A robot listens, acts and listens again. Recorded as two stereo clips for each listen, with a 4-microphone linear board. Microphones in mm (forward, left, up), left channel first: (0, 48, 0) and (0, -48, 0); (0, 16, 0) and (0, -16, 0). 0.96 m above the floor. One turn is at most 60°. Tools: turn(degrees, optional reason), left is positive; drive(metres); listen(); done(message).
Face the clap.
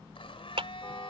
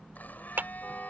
turn(degrees=-60)
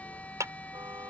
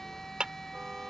turn(degrees=-35, reason="So it is at 35° right.")
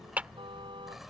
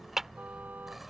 turn(degrees=-15, reason="The clap is now 15° right.")
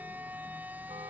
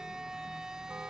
listen()
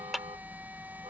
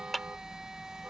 done("Found it: a clap, straight ahead.")